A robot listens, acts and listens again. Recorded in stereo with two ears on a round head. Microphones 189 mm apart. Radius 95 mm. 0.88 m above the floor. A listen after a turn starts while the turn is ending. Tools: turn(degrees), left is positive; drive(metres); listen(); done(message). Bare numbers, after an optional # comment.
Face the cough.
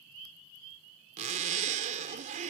listen()
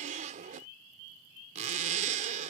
listen()
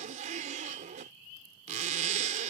done("I can't make out a cough, only a zipper.")